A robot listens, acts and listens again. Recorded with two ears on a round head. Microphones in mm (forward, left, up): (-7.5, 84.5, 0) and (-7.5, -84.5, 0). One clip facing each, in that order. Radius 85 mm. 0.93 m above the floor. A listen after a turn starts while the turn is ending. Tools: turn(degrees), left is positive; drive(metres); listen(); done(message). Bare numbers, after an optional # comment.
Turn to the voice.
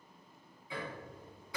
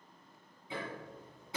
listen()
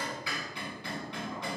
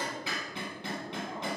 listen()
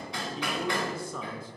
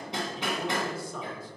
# The man speaking: about 75° left or 105° left.
turn(75)
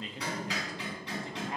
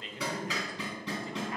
listen()
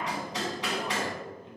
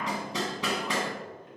listen()
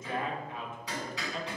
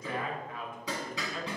# So it is at 20° left.
turn(20)
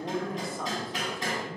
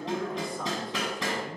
done("Found it: a man speaking, straight ahead.")